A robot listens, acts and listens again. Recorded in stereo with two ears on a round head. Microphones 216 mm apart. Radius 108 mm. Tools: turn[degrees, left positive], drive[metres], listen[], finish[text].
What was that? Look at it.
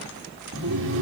Thought: The laughter: about 50° right or 130° right.
Action: turn[-50]
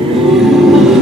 Action: finish[Found it: laughter, straight ahead.]